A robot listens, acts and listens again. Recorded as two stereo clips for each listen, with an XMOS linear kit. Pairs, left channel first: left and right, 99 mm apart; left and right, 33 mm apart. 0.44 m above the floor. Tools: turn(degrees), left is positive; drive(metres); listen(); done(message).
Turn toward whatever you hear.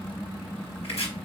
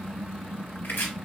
turn(degrees=90)
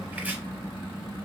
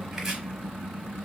turn(degrees=-15)
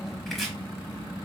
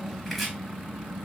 done("Found it: chopping, straight ahead, under 1 m away.")